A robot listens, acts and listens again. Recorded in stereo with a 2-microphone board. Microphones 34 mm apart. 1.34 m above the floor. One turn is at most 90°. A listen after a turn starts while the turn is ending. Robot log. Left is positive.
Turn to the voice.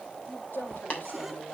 cmd yaw +90
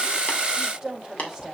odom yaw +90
note: So it is at 15° right.
cmd yaw -15
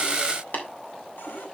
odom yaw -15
cmd idle
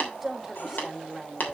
end: Facing the woman speaking, over 4 m away.